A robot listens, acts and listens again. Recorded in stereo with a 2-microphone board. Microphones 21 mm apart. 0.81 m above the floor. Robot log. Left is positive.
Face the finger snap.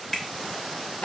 note: The finger snap: about 20° left or 160° left.
cmd yaw +20
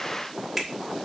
end: Found it: a finger snap, straight ahead, 2 to 4 m away.